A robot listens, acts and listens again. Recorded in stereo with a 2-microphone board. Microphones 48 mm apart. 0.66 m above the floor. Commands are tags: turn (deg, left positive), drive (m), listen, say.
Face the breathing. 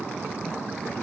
<listen/>
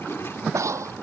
<turn deg="-90"/>
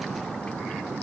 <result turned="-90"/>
<listen/>
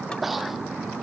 <say>Facing the breathing.</say>